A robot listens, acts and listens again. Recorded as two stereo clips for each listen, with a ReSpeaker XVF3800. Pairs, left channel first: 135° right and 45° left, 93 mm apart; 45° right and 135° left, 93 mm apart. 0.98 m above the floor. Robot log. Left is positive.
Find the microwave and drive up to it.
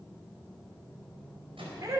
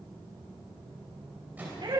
note: The microwave: 60° left.
cmd yaw +60
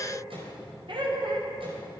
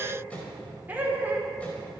cmd idle
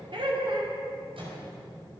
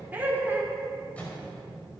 note: The microwave is now 30° left.
cmd yaw +30
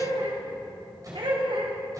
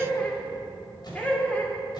cmd idle
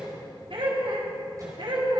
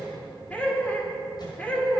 cmd idle
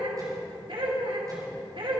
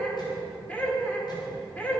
end: Facing where the microwave came from. I can't hear it now. I did not reach it.